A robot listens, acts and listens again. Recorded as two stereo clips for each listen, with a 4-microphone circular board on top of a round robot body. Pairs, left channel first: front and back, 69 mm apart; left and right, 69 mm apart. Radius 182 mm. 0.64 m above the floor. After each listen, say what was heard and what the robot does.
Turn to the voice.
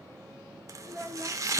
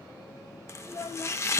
The child speaking: 100° left. Turn 100° left.
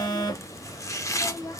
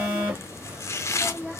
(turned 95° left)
Found it: a child speaking, straight ahead, 1 to 2 m away.